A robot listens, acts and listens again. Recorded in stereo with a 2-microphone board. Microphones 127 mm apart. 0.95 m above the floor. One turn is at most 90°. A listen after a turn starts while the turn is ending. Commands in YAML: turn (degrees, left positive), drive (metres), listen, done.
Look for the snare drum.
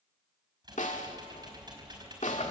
turn: 90
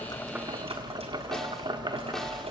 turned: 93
listen: true
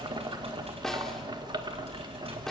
done: "Found it: a snare drum, straight ahead, 1 to 2 m away."